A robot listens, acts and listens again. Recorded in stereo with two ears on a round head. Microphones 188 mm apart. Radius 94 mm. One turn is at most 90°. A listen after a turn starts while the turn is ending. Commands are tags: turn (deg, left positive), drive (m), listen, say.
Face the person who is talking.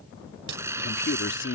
<turn deg="60"/>
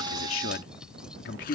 <turn deg="55"/>
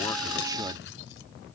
<listen/>
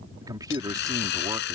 <turn deg="-20"/>
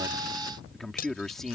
<say>Found it: a man speaking, straight ahead.</say>